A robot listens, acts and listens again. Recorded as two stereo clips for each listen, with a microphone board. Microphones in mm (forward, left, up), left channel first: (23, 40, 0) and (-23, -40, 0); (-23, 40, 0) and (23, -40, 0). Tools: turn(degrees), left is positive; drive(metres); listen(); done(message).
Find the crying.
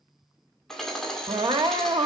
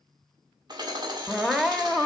turn(degrees=-145)
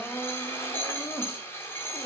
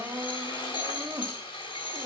done("Facing the crying, under 1 m away.")